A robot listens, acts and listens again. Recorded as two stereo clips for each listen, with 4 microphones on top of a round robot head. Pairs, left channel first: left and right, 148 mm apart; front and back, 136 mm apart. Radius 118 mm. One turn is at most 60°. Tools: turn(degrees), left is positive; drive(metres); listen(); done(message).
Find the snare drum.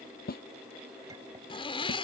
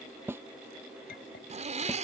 turn(degrees=60)
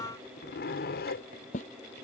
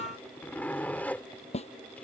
turn(degrees=40)
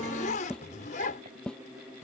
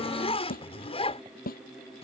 done("Found it: a snare drum, straight ahead.")